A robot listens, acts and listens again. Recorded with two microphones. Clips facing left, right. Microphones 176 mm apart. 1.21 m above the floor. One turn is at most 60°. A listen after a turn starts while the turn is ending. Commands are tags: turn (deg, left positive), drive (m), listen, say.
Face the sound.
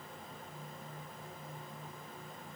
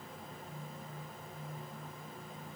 <listen/>
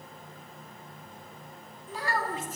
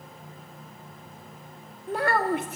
<turn deg="-60"/>
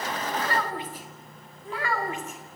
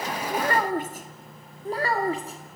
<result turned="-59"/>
<turn deg="-35"/>
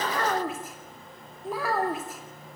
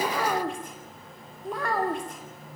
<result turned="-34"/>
<say>Found it: a child speaking, straight ahead, 2 to 4 m away.</say>